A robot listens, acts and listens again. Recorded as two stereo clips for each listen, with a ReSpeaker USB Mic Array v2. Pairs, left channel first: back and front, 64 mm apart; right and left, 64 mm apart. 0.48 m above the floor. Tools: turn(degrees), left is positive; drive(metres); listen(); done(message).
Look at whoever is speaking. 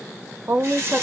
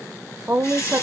turn(degrees=40)
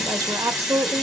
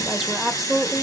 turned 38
done("Facing the woman speaking.")